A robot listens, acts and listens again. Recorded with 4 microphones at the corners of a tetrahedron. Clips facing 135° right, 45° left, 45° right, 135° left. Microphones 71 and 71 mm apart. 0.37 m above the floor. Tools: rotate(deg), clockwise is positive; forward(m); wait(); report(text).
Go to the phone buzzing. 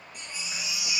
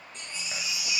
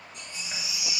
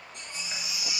wait()
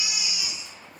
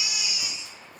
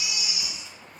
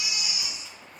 wait()
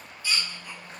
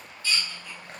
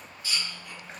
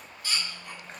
report("I can't make out a phone buzzing, only a baby crying.")